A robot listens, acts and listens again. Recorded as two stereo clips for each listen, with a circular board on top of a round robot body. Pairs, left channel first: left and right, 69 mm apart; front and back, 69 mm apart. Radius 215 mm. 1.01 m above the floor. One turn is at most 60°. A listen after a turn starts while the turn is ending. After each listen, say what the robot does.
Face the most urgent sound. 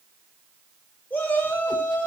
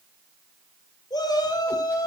Turn 30° left.
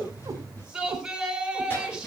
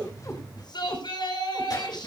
Turn 10° right.
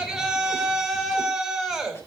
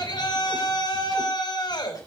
Facing the shout.